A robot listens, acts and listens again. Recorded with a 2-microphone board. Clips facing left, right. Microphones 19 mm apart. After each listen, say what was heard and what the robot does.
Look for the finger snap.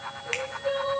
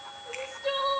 The finger snap: about 65° left or 115° left. Turn 65° left.
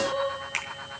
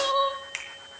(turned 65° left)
Facing the finger snap.